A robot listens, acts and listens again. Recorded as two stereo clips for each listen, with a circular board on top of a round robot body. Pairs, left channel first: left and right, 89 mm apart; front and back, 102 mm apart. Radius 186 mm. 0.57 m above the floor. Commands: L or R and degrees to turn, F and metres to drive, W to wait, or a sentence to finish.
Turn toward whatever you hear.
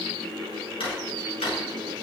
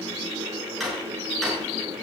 L90
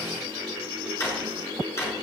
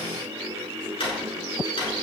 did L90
L30
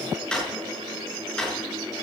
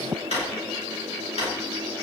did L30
Found it: a drawer, straight ahead, over 4 m away.